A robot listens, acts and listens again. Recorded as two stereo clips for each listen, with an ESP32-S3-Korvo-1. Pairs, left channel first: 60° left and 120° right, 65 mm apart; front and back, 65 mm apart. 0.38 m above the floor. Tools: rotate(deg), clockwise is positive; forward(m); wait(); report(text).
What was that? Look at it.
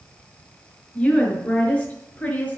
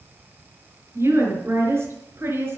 rotate(-130)
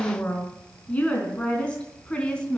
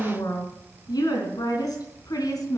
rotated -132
rotate(15)
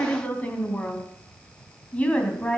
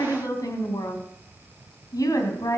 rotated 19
rotate(10)
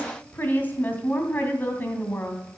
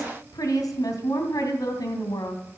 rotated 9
report("Facing the woman speaking.")